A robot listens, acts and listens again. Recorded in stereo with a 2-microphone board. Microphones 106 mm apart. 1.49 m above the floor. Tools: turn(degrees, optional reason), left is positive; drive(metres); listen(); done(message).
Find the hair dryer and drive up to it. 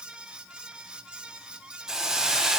listen()
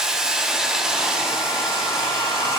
turn(degrees=55, reason="The hair dryer: about 55° left or 125° left.")
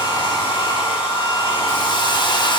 turn(degrees=70, reason="So it is at 70° left.")
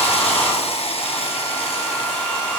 turn(degrees=15, reason="The hair dryer is now 15° left.")
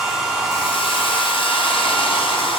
drive(metres=1.0)
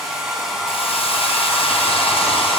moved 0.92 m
drive(metres=1.0)
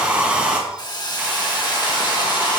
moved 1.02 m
turn(degrees=-10, reason="The hair dryer is now 10° right.")
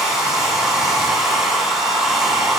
drive(metres=1.0)
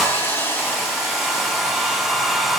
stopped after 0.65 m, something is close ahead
done("Arrived at the hair dryer, straight ahead.")